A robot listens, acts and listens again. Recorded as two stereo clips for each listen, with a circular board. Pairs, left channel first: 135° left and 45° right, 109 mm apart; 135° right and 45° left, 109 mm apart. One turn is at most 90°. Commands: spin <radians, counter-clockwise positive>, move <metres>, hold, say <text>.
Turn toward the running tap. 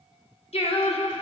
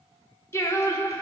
hold
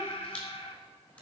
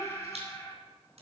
hold
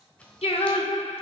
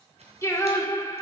say I can't make out a running tap, only a camera shutter and singing.